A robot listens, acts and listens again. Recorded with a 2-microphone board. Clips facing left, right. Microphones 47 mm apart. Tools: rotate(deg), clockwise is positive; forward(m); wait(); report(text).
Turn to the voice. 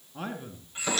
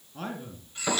rotate(-30)
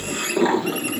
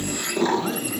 wait()
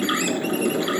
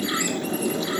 wait()
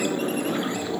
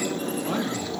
report("I heard a man speaking, but can't make it out now. It was about 20° right or 140° left.")